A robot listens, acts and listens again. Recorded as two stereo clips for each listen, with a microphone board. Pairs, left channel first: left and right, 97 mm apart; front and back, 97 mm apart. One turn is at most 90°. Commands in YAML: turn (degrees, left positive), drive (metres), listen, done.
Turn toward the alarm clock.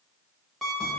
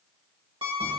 turn: 90
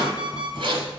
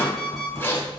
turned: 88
turn: 90
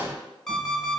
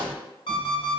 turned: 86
done: "Facing the alarm clock, 1 to 2 m away."